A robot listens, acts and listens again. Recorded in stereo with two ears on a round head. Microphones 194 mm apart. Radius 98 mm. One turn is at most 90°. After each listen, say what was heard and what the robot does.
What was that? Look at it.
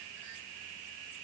Keep listening.
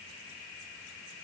Keep listening.
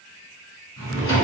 The drawer: about 25° left or 155° left. Turn 25° left.
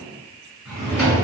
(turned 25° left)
Facing the drawer.